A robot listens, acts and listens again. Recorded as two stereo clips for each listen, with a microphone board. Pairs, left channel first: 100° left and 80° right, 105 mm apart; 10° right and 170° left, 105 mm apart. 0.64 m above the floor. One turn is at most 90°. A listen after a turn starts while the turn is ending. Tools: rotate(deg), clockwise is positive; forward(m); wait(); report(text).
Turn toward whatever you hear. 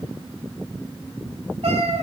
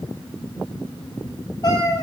rotate(65)
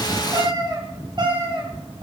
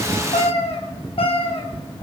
rotate(45)
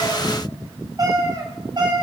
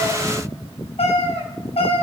rotate(35)
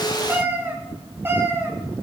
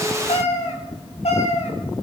rotate(10)
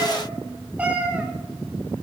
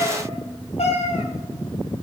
report("Facing the cat meowing.")